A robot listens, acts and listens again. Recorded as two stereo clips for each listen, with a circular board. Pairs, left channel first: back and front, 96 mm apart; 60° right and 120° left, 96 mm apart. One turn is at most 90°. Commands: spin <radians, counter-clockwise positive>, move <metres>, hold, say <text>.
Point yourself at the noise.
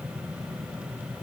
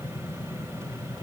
hold
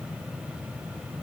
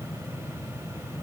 hold
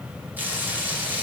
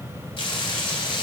spin -1.22
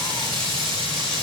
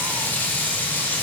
spin 0.17
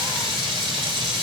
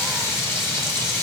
say Facing the frying.